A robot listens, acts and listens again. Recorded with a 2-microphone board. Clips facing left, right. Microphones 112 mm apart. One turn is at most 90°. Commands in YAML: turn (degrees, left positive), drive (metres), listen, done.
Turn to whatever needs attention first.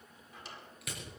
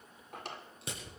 listen: true
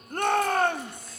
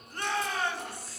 turn: 50
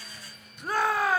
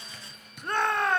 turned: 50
done: "Facing the shout, under 1 m away."